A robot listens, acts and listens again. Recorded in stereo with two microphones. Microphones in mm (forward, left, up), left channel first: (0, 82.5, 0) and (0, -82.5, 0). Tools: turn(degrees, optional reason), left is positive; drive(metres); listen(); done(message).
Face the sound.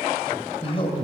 turn(degrees=35, reason="The man speaking: about 35° left or 145° left.")
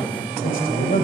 turn(degrees=110, reason="So it is at 110° left.")
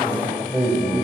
turn(degrees=-10, reason="The man speaking is now 10° right.")
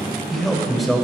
done("Found it: a man speaking, straight ahead.")